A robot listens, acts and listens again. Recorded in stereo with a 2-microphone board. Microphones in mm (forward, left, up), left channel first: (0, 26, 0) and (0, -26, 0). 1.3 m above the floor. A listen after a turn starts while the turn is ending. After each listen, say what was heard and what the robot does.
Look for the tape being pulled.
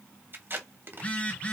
The tape being pulled: about 45° right or 135° right. Turn 45° right.
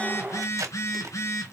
So it is at 90° right. Turn 90° right.
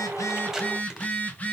Keep listening.
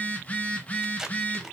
Found it: tape being pulled, straight ahead, 1 to 2 m away.